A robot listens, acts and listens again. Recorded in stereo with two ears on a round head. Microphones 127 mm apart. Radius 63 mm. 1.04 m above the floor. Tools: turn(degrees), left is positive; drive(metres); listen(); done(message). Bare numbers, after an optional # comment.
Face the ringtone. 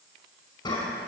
listen()
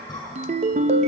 # The ringtone: about 50° right or 130° right.
turn(-50)
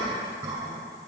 listen()
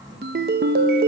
# So it is at 80° right.
turn(-80)
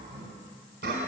listen()
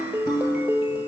# The ringtone is now 15° right.
turn(-15)
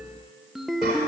done("Found it: a ringtone, straight ahead, under 1 m away.")